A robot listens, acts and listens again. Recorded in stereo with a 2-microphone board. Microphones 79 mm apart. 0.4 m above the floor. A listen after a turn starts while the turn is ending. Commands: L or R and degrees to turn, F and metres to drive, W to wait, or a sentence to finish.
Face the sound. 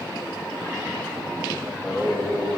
R30
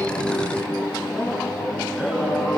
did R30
R10
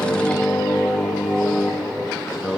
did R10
R10
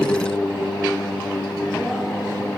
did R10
Found it: singing, straight ahead, 2 to 4 m away.